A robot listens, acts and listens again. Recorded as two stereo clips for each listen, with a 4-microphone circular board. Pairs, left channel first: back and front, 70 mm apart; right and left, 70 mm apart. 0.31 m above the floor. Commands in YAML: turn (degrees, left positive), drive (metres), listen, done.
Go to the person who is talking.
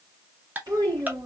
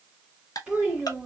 turn: 20
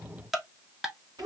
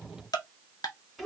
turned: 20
drive: 1.0
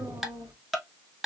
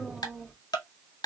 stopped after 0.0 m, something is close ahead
done: "Something is in my way. I am facing the child speaking but have not reached it."